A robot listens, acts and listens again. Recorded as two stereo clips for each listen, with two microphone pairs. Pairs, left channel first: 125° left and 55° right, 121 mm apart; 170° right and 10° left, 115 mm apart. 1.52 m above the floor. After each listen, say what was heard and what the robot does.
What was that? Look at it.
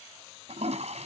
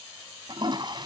The toilet flushing: 40° right. Turn 40° right.
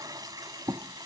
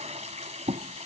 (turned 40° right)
Facing the toilet flushing.